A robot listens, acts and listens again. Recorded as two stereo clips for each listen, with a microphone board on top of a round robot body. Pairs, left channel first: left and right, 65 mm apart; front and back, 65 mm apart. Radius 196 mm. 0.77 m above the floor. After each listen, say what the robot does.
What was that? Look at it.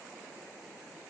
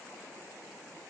Keep listening.
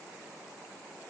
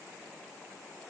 Keep listening.
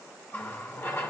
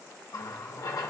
Turn 30° left.
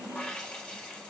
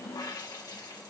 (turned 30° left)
Turn 15° left.
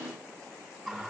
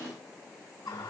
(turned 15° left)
Facing the running tap, 1 to 2 m away.